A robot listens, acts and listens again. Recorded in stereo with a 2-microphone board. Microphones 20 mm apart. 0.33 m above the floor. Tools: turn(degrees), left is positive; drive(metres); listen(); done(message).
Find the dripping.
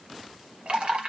turn(degrees=-65)
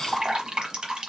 turn(degrees=-45)
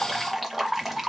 done("Facing the dripping, 1 to 2 m away.")